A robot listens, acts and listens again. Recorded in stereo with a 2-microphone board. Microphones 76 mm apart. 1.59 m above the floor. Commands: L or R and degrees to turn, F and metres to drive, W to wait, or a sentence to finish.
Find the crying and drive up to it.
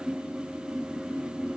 W
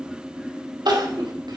R75
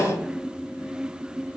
R20
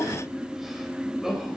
F1.0
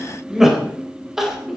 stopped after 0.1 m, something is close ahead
Blocked. The crying is further on, straight ahead.